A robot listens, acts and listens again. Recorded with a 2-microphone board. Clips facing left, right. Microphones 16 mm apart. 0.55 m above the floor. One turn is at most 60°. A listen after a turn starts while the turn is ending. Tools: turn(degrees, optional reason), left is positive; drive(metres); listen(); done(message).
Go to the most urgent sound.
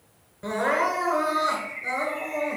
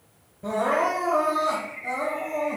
turn(degrees=60)
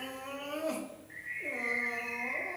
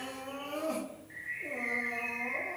turn(degrees=45, reason="So it is at 45° left.")
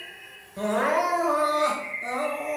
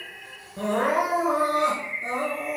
drive(metres=1.0)
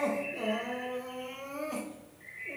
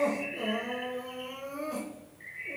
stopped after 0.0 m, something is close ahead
done("Blocked. The crying is further on, straight ahead.")